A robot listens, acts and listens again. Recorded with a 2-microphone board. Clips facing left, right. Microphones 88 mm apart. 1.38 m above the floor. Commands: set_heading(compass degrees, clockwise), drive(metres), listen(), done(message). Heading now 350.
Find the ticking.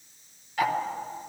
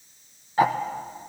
set_heading(20)
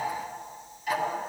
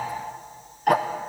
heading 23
set_heading(143)
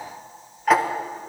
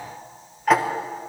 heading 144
done("Facing the ticking, under 1 m away.")